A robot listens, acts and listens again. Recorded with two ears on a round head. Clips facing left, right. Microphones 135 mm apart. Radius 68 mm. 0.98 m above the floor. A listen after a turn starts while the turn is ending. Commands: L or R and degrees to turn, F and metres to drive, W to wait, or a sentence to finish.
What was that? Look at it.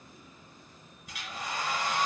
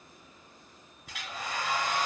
R50
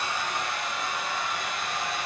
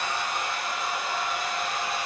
Facing the hair dryer, 2 to 4 m away.